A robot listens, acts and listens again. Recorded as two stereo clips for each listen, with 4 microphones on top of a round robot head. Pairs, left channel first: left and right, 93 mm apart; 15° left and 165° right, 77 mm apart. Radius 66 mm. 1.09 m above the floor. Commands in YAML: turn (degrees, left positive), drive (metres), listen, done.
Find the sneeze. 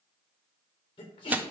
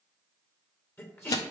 turn: 65
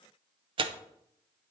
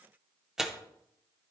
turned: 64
done: "I heard a sneeze from this way, but can't make it out now."